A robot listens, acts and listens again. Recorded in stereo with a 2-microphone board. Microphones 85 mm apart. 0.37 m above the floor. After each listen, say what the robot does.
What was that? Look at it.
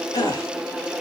Turn 45° left.
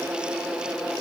Keep listening.
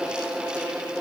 I heard a gasp, but can't make it out now. It was about straight ahead or 90° left.